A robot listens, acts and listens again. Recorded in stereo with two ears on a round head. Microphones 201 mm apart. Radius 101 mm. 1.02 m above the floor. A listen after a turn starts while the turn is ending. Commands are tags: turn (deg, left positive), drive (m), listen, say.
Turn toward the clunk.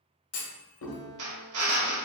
<turn deg="70"/>
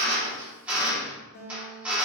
<listen/>
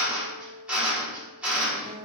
<say>I heard a clunk, but can't make it out now. It was about straight ahead or 40° left.</say>